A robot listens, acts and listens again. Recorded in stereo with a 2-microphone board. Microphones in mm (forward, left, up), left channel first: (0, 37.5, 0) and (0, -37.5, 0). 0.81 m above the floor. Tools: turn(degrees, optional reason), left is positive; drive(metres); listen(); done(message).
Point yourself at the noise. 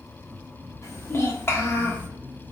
turn(degrees=30, reason="The child speaking: about 30° left or 150° left.")
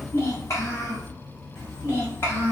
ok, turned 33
turn(degrees=30, reason="The child speaking: about 30° left or 150° left.")
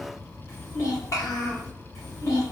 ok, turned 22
turn(degrees=40, reason="The child speaking: about 40° left or 140° left.")
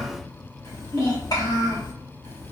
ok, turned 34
turn(degrees=110, reason="So it is at 110° left.")
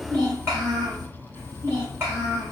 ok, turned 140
turn(degrees=-35, reason="The child speaking is now 35° right.")
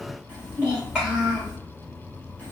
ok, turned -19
turn(degrees=-15, reason="The child speaking is now 15° right.")
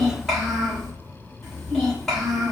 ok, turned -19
done("Found it: a child speaking, straight ahead.")